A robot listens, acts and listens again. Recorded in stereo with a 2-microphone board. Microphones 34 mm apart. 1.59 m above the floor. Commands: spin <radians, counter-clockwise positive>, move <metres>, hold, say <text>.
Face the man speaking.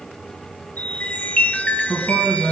spin -0.52
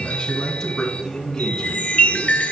spin 0.26
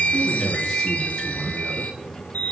spin -0.17
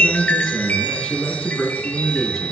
say Found it: a man speaking, straight ahead, 2 to 4 m away.